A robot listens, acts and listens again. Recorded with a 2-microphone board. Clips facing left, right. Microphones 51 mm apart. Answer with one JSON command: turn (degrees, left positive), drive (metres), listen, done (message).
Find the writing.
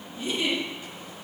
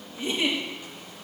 {"listen": true}
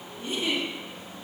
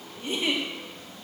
{"listen": true}
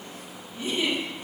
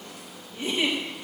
{"done": "I can't make out writing, only a giggle."}